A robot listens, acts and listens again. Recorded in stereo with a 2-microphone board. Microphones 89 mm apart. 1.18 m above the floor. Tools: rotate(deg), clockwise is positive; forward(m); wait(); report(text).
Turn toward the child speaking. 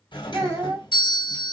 rotate(45)
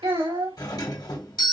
rotate(90)
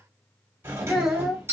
report("Found it: a child speaking, straight ahead, 1 to 2 m away.")